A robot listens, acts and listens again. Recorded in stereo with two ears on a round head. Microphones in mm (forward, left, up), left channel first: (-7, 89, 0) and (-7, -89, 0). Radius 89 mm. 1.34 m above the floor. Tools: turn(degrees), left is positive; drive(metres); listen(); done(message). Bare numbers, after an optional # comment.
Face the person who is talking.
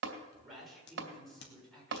turn(30)
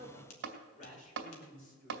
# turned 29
# So it is at 135° left.
turn(135)
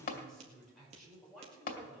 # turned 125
done("Facing the man speaking.")